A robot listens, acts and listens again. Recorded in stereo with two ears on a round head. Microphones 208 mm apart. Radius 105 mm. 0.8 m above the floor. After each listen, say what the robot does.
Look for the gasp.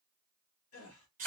Turn 70° left.
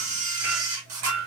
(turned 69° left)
Keep listening.
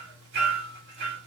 I heard a gasp, but can't make it out now. It was about straight ahead or 40° left.